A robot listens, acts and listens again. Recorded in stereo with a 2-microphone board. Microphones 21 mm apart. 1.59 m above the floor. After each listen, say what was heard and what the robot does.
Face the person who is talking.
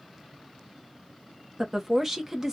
The woman speaking: about 20° right or 160° right. Turn 20° right.
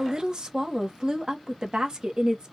So it is at 140° right. Turn 140° right.
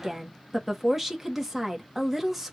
The woman speaking is now 15° right. Turn 15° right.
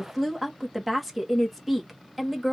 Found it: a woman speaking, straight ahead, 1 to 2 m away.